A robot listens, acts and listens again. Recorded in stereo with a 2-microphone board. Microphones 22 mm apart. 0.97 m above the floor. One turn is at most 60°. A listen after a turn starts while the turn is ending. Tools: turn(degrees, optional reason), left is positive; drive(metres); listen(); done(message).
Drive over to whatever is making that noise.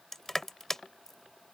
turn(degrees=15, reason="The crushing: about 15° left or 165° left.")
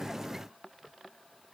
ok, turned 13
listen()
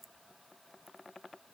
listen()
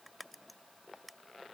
done("I heard crushing, but can't make it out now. It was about straight ahead or 150° left. I did not reach it.")